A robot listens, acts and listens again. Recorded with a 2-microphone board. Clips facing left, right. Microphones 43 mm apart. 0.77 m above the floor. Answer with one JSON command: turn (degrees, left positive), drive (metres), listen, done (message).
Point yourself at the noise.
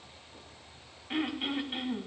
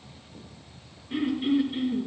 {"turn": 90}
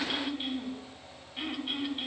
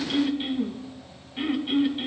{"turn": -10}
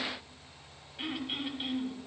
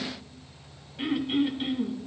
{"done": "Found it: throat clearing, straight ahead, 2 to 4 m away."}